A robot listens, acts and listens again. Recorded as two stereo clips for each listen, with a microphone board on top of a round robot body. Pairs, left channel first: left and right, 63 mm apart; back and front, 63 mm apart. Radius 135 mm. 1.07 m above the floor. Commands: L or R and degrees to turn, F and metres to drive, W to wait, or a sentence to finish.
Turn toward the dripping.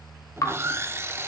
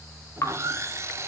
L130
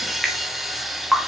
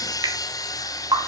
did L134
Facing the dripping, 1 to 2 m away.